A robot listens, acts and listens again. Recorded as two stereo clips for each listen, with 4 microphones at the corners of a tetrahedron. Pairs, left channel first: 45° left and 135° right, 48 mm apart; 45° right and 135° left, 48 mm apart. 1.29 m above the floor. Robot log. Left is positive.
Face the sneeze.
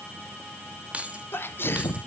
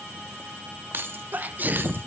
note: The sneeze: 85° left.
cmd yaw +85
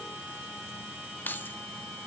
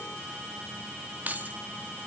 end: I heard a sneeze from this way, but can't make it out now.